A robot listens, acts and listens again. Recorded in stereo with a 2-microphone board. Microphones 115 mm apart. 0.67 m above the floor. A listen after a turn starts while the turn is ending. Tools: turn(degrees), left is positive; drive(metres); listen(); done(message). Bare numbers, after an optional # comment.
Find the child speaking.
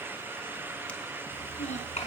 turn(90)
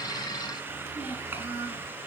# So it is at 15° right.
turn(-15)
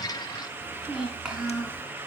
# The child speaking is now 10° right.
turn(-10)
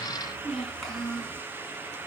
done("Found it: a child speaking, straight ahead, over 4 m away.")